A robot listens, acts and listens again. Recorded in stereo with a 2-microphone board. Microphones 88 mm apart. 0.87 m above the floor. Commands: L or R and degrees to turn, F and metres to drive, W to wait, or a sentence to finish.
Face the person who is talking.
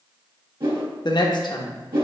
L60
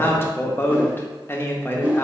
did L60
L30
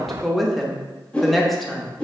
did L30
Found it: a woman speaking, straight ahead, under 1 m away.